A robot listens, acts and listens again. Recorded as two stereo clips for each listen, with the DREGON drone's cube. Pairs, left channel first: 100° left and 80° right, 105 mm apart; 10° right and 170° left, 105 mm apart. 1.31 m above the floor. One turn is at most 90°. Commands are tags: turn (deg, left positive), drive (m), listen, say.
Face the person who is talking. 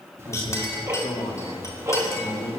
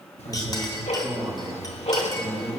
<turn deg="90"/>
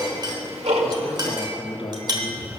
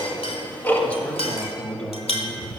<turn deg="65"/>
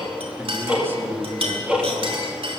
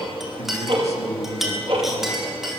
<turn deg="-10"/>
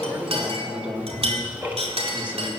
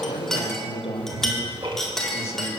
<say>Facing the man speaking.</say>